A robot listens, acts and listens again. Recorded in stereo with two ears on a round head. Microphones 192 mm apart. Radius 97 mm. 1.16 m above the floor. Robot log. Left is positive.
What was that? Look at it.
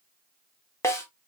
cmd yaw +30
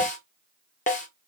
note: So it is at 135° left.
cmd yaw +135
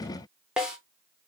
end: Facing the snare drum, 1 to 2 m away.